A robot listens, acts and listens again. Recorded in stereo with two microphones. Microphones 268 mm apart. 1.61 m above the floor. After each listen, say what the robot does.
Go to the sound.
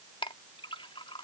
Turn 20° left.
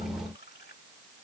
Keep listening.
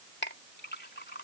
Turn 140° left.
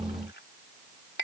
Turn 40° left.
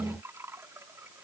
Turn 10° right.
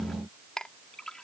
Drive 1.0 m forward.
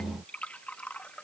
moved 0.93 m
Drive 1.0 m forward.
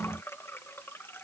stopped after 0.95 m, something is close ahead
Turn 10° left.
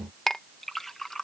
Arrived at the clink, straight ahead.